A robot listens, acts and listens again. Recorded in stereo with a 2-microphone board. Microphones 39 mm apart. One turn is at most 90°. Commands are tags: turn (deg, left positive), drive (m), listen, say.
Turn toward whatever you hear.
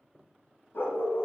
<turn deg="65"/>
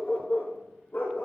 <turn deg="60"/>
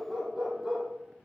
<say>Found it: a dog barking, straight ahead.</say>